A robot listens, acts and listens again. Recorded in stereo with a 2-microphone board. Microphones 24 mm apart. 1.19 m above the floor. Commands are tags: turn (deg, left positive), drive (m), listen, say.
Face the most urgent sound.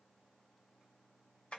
<listen/>
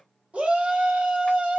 <turn deg="-70"/>
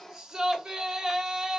<turn deg="-30"/>
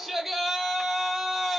<say>Facing the shout, under 1 m away.</say>